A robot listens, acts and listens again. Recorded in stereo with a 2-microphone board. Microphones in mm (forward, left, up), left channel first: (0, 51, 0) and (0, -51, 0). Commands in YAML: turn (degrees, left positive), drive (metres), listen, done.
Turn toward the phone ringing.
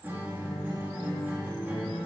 listen: true
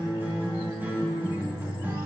listen: true
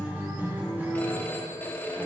turn: 20
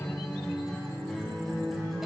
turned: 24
listen: true
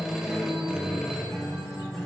listen: true
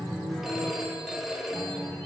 done: "Facing the phone ringing, 1 to 2 m away."